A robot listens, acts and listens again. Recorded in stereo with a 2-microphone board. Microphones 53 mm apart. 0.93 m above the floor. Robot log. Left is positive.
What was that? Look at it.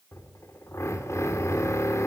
note: The drill: about 65° left or 115° left.
cmd yaw +65
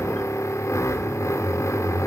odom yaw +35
note: So it is at 75° left.
cmd yaw +75
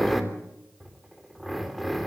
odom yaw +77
end: Facing the drill, 2 to 4 m away.